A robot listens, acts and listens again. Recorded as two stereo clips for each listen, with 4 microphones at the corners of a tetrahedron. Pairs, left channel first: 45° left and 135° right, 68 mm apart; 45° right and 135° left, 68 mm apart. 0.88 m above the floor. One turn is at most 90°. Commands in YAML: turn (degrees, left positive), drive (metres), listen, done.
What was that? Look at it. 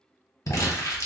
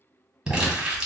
turn: 55
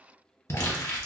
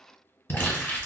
done: "Found it: crumpling, straight ahead, 1 to 2 m away."